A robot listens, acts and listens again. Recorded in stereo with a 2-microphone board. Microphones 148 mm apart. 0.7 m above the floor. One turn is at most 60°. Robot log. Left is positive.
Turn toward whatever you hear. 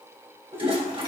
note: The toilet flushing: about 35° right or 145° right.
cmd yaw -35
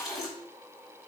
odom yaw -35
end: Facing the toilet flushing, over 4 m away.